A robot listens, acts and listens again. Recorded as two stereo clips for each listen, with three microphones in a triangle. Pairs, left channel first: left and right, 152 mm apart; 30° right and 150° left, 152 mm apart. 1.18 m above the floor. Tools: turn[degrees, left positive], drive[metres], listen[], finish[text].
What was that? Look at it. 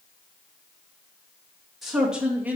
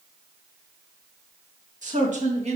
Thought: The man speaking: 170° right.
Action: turn[-170]
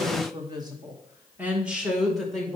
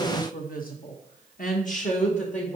Action: finish[Facing the man speaking.]